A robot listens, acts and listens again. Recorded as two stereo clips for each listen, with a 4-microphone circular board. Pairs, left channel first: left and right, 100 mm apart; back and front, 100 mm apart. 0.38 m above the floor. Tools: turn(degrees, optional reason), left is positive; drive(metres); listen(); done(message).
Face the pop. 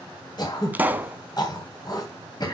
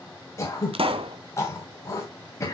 turn(degrees=-20, reason="The pop: 20° right.")
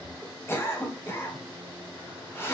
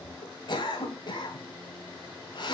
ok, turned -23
done("Facing where the pop came from. I can't hear it now.")